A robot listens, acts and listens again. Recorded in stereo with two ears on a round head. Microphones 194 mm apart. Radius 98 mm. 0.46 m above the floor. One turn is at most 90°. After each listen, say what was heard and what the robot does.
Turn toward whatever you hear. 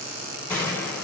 Turn 30° left.
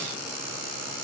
Keep listening.
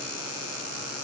I heard a gunshot, but can't make it out now. It was about 20° right or 140° left.